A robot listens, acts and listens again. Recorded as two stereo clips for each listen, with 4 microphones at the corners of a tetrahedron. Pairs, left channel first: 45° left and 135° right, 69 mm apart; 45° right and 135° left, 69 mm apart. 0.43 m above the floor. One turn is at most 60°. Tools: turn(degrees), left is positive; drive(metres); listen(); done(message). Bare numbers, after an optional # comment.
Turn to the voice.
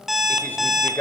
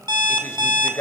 done("Facing the man speaking.")